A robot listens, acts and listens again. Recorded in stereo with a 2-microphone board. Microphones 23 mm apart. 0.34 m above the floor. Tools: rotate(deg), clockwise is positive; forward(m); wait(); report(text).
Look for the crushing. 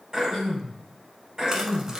rotate(30)
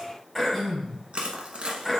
rotate(120)
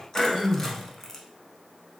rotate(-20)
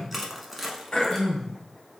report("Facing the crushing.")